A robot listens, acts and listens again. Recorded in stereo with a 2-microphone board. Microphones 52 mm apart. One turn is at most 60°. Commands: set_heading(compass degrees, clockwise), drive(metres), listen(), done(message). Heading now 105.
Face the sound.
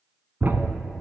set_heading(140)
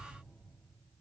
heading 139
listen()
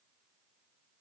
done("I heard a thud, but can't make it out now. It was about 5° right or 110° right.")